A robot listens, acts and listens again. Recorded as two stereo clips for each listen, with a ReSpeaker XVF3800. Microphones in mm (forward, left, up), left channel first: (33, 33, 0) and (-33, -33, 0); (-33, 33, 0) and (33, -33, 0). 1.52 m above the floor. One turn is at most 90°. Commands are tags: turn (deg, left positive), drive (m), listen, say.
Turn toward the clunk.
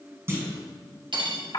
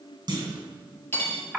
<turn deg="-80"/>
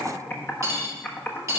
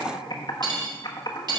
<say>I heard a clunk from this way, but can't make it out now.</say>